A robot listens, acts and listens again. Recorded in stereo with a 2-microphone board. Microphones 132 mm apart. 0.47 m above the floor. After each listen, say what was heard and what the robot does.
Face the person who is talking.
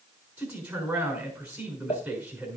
Turn 30° right.
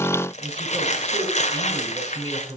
So it is at 145° right. Turn 145° right.
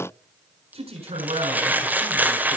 The man speaking is now 55° right. Turn 55° right.
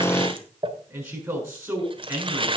The man speaking is now 20° right. Turn 20° right.
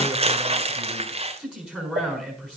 The man speaking is now 10° right. Turn 10° right.
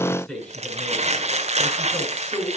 Found it: a man speaking, straight ahead, over 4 m away.